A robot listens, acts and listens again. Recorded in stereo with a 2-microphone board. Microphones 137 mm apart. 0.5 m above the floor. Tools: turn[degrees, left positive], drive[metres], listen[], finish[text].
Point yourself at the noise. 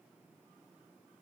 Action: listen[]
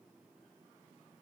Action: listen[]
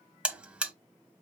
Action: turn[-30]
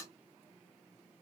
Action: listen[]
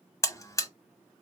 Thought: So it is at 25° left.
Action: turn[25]
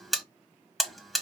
Action: finish[Found it: a buzzer, straight ahead, under 1 m away.]